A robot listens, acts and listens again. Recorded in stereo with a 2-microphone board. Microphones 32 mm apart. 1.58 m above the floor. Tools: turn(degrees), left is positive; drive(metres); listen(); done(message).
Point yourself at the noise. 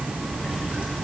listen()
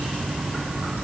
listen()
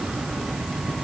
done("I can't make out anything to turn to.")